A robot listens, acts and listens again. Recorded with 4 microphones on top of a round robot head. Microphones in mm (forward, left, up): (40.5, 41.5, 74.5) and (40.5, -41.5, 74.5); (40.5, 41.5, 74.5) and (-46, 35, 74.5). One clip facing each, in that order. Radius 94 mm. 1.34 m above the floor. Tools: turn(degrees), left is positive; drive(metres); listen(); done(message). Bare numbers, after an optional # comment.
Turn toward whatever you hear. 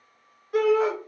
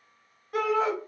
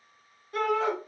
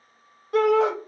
# The shout: straight behind.
turn(180)
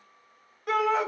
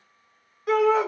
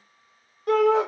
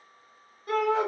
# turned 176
done("Facing the shout, under 1 m away.")